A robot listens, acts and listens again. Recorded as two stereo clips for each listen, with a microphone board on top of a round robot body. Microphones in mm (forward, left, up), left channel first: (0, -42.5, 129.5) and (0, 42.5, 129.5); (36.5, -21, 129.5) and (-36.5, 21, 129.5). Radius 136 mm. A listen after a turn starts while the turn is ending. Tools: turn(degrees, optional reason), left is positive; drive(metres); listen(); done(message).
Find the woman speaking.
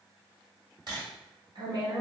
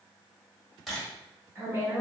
turn(degrees=95, reason="The woman speaking: 95° left.")
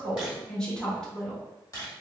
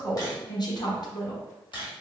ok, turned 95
turn(degrees=-10, reason="The woman speaking is now 10° right.")
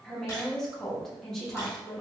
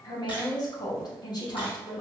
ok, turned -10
done("Facing the woman speaking.")